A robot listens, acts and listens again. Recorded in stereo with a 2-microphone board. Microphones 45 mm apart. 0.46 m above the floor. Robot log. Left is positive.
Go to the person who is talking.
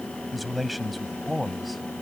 cmd yaw +30
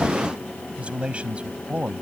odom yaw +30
note: So it is at 30° right.
cmd yaw -30
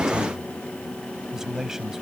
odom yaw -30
note: The man speaking is now 10° right.
cmd yaw -10
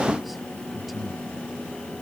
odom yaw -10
cmd fwd 1.0
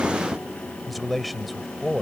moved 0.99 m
cmd fwd 1.0
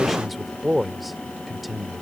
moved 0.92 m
cmd fwd 1.0
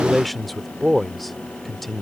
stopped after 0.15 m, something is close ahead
end: Arrived at the man speaking, straight ahead.